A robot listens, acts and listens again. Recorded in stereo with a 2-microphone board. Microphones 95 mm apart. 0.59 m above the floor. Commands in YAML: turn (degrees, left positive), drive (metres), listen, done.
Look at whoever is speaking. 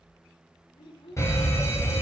turn: 70
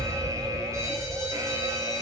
listen: true
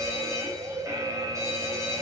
listen: true
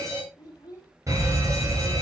turn: 40
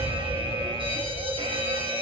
listen: true
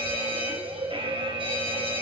listen: true
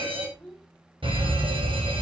done: "Found it: a child speaking, straight ahead."